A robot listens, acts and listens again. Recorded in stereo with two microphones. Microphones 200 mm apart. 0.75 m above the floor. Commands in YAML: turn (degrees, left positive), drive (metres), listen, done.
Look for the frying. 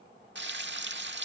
turn: -65
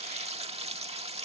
turn: -35
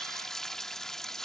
done: "Facing the frying."